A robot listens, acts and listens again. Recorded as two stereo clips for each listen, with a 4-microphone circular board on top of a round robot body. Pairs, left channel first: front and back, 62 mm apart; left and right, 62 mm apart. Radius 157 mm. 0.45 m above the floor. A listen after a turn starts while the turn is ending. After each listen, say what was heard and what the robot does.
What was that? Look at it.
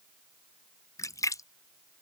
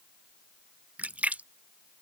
The splash: 25° right. Turn 25° right.
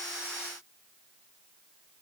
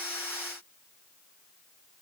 I heard a splash from this way, but can't make it out now.